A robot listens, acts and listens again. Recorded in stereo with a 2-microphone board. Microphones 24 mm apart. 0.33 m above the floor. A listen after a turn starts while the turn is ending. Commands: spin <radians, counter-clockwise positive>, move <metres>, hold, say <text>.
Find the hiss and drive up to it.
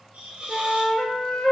spin -1.57
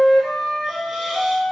hold
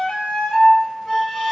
hold
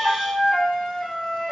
say Facing where the hiss came from. I can't hear it now. I did not reach it.